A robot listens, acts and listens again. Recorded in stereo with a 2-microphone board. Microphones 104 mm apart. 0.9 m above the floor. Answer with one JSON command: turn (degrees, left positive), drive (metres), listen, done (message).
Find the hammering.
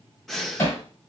{"turn": 25}
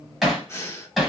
{"done": "Found it: hammering, straight ahead."}